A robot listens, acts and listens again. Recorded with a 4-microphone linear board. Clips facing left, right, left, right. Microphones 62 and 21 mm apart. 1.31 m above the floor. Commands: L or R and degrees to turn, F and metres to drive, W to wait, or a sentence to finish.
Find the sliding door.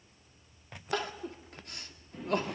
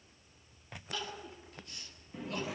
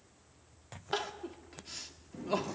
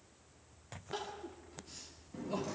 R30
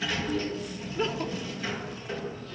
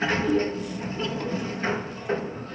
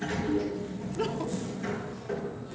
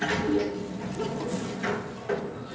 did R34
R140
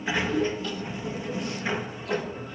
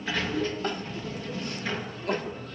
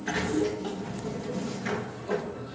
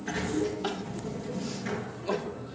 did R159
L20
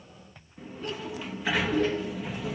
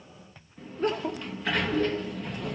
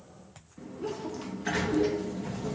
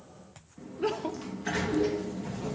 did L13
Facing the sliding door, 2 to 4 m away.